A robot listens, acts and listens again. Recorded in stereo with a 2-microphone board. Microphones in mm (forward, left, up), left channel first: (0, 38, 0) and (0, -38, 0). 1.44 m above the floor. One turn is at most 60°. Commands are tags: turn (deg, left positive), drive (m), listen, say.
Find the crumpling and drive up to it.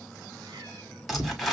<turn deg="30"/>
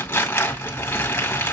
<turn deg="60"/>
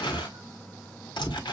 <turn deg="60"/>
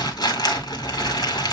<turn deg="60"/>
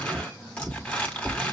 <turn deg="15"/>
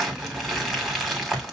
<drive m="1.0"/>
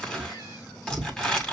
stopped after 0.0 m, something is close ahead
<turn deg="10"/>
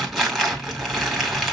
<say>Something is in my way. I am facing the crumpling but have not reached it.</say>